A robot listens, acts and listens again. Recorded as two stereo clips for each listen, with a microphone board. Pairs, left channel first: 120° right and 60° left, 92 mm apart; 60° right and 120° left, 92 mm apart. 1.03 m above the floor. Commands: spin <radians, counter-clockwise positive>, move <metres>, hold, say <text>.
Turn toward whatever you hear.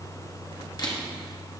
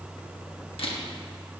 spin -1.31
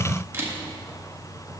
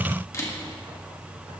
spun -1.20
say Facing the camera shutter, 1 to 2 m away.